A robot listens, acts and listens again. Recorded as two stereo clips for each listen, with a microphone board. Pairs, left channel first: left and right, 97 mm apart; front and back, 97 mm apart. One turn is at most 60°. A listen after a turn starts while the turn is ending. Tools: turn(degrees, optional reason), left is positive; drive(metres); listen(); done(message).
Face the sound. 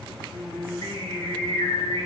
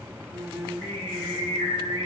turn(degrees=35, reason="The singing: 35° left.")
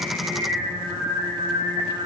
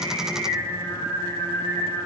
turn(degrees=-25, reason="The singing is now 25° right.")
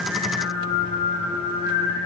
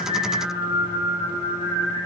turn(degrees=-15, reason="The singing is now 15° right.")
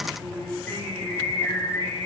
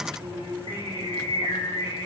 done("Facing the singing.")